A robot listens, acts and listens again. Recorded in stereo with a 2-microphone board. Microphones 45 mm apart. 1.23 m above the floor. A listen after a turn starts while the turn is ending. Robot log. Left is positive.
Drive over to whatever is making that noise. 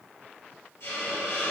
note: The hiss: about 75° left or 105° left.
cmd yaw +75
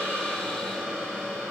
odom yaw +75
note: So it is at 10° left.
cmd yaw +10
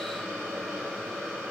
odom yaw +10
cmd fwd 1.0
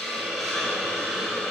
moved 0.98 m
cmd fwd 1.0
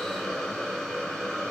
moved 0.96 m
cmd fwd 1.0
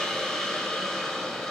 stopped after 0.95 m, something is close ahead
note: The hiss is now 15° left.
cmd yaw +15
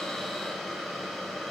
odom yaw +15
end: I am next to the hiss.